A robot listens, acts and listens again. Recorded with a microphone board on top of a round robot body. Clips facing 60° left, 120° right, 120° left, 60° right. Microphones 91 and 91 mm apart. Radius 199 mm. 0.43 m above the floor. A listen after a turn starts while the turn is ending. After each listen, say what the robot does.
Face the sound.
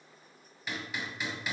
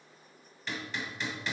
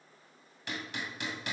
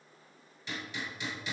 Turn 145° left.
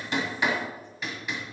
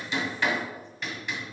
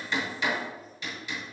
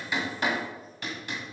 Turn 25° right.
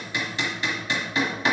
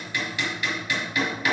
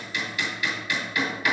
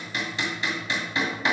Found it: hammering, straight ahead, 2 to 4 m away.